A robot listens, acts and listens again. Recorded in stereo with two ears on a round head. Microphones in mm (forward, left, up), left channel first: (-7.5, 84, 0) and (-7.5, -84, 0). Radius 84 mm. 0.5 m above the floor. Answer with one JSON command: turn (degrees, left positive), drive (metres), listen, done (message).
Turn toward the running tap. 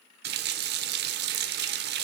{"turn": -55}
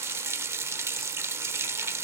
{"turn": -15}
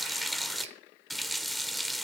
{"done": "Found it: a running tap, straight ahead."}